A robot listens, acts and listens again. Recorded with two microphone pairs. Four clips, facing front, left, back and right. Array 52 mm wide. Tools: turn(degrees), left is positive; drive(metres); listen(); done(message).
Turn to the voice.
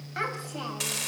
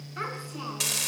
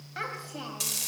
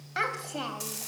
turn(degrees=-80)
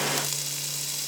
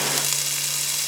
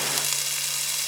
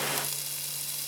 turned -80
listen()
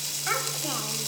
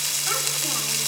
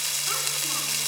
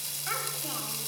listen()
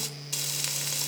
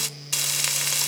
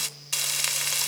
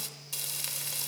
done("I heard a child speaking from this way, but can't make it out now.")